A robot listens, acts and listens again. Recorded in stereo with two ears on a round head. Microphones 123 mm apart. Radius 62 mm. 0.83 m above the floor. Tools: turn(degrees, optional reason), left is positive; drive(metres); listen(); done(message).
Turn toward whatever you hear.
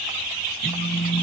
turn(degrees=35, reason="The phone buzzing: about 35° left or 145° left.")
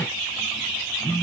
done("Facing the phone buzzing.")